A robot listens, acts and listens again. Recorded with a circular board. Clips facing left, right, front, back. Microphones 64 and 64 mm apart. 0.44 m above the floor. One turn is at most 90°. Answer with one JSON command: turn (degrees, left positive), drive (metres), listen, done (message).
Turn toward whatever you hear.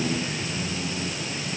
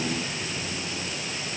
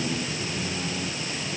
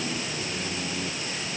{"listen": true}
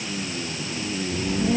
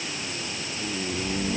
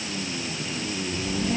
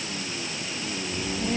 {"turn": 90}
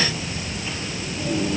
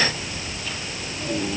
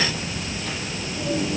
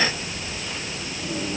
{"turn": 25}
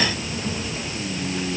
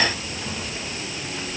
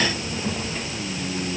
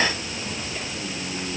{"turn": 15}
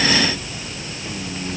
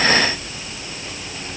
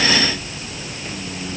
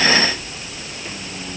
{"done": "Found it: a child speaking, straight ahead."}